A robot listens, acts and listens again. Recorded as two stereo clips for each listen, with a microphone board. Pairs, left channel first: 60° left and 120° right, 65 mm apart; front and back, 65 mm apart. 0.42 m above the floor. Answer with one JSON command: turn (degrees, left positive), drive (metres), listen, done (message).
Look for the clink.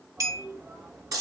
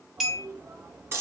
{"turn": -95}
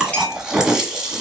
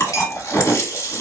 {"listen": true}
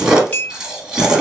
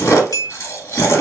{"done": "Facing the clink, under 1 m away."}